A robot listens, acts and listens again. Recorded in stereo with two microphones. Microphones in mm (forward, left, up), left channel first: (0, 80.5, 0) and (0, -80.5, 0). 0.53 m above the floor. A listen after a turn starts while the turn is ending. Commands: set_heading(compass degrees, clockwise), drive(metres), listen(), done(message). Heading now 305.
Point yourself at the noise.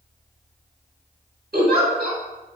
set_heading(15)
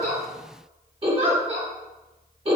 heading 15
set_heading(50)
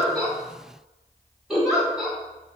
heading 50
done("Facing the giggle.")